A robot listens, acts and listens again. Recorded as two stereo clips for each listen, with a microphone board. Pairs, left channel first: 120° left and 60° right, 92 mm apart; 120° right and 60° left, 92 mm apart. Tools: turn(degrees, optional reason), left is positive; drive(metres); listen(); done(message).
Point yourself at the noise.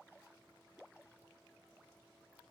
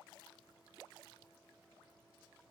listen()
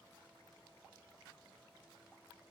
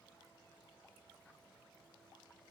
listen()
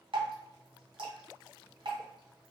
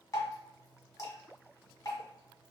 turn(degrees=-65, reason="The dripping: 65° right.")
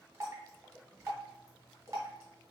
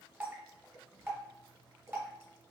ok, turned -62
done("Found it: dripping, straight ahead, 1 to 2 m away.")